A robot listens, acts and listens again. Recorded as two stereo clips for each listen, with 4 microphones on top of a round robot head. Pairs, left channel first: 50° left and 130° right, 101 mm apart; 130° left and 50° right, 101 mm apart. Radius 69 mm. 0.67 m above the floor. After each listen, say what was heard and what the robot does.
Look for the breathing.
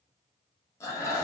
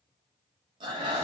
The breathing: 10° right. Turn 10° right.
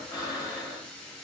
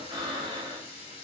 Found it: breathing, straight ahead.